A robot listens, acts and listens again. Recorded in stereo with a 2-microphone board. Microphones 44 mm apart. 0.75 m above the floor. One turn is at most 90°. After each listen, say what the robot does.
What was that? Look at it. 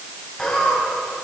Turn 30° left.
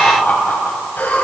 Turn 90° left.
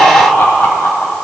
Turn 65° left.
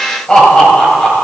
Turn 15° left.
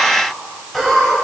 Found it: laughter, straight ahead.